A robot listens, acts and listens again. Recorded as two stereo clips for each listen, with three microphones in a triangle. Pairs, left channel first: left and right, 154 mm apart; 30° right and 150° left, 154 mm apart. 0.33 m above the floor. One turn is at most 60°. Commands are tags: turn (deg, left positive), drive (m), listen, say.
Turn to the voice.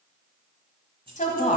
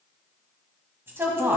<turn deg="60"/>
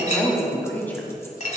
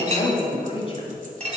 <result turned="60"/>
<turn deg="15"/>
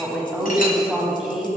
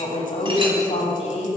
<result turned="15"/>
<say>Facing the woman speaking, 1 to 2 m away.</say>